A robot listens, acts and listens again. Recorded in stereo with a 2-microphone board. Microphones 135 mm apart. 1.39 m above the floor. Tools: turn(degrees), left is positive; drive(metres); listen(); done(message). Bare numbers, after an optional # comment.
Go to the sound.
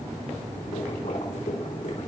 # The boiling: about 70° left or 110° left.
turn(70)
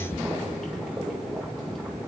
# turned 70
drive(1.0)
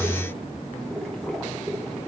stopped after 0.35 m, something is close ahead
done("Blocked. The boiling is further on, straight ahead.")